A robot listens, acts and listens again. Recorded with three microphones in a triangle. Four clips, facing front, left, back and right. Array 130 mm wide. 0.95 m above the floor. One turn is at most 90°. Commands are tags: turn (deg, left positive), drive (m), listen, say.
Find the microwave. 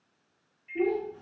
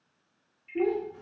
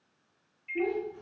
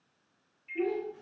<turn deg="-90"/>
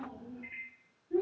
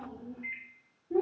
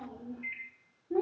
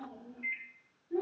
<turn deg="-75"/>
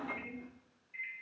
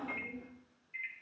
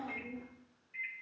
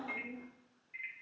<say>Found it: a microwave, straight ahead.</say>